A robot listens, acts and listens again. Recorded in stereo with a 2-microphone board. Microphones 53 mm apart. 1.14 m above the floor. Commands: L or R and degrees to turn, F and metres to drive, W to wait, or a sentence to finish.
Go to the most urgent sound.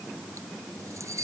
W
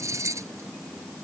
W
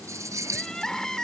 L30
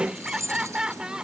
R20
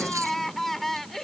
F1.0
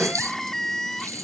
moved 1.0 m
F1.0
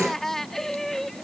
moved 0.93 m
F1.0
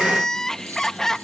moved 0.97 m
L10
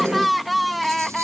F1.0
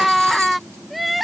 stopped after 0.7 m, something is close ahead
Arrived at the crying, straight ahead.